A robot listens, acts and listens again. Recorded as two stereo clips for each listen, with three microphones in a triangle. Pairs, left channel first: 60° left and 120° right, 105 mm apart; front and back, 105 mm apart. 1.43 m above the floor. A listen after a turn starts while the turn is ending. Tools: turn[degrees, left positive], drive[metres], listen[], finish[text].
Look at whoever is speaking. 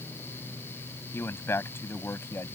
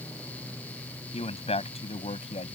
Action: finish[Facing the man speaking.]